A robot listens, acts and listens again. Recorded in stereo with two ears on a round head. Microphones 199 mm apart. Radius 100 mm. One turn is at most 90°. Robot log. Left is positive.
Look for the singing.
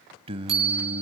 note: The singing: about 25° right or 155° right.
cmd yaw -25
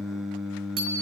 end: Facing the singing, under 1 m away.